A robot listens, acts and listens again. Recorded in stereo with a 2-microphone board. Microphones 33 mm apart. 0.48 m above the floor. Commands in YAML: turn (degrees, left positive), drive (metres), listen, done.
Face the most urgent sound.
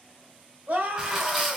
turn: -55
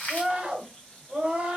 turn: -35
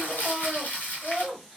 done: "Facing the scream."